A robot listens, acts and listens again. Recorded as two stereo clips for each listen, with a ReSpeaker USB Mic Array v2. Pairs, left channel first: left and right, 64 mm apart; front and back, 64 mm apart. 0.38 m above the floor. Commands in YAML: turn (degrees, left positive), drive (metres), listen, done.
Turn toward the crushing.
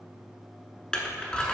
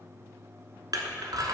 turn: 165
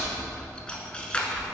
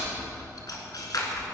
turn: 15
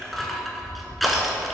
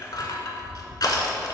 done: "Found it: crushing, straight ahead, under 1 m away."